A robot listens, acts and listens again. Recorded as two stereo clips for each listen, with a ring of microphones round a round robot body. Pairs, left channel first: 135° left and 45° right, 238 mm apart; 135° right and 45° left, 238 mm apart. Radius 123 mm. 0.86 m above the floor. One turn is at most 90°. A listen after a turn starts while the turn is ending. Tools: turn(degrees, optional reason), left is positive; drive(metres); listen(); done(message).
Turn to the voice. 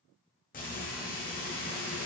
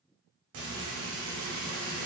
listen()
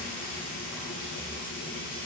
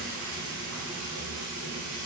listen()
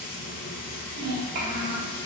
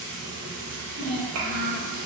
turn(degrees=10, reason="The child speaking: 10° left.")
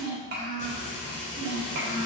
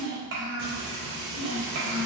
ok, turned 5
done("Found it: a child speaking, straight ahead.")